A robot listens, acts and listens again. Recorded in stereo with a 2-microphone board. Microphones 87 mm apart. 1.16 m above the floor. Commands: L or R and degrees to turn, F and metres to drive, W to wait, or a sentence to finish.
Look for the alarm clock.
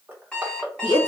L30
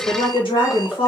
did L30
W
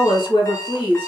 L140
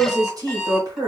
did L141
Found it: an alarm clock, straight ahead, 1 to 2 m away.